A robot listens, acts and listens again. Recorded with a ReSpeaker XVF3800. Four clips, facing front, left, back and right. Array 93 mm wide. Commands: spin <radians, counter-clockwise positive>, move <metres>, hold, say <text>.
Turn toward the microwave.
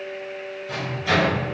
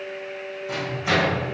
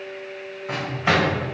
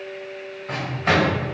spin -2.44
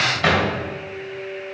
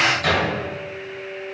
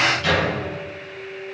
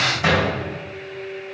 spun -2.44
spin -0.35
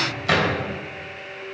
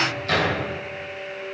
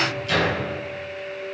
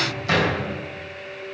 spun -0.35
spin -0.17
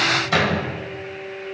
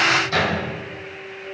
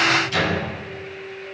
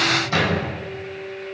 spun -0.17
say Facing the microwave.